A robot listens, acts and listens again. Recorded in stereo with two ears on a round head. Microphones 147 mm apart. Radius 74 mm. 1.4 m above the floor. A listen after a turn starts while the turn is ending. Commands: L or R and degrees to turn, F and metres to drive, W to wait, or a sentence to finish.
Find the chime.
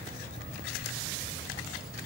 W
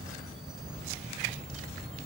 W
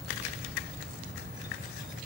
I can't make out a chime.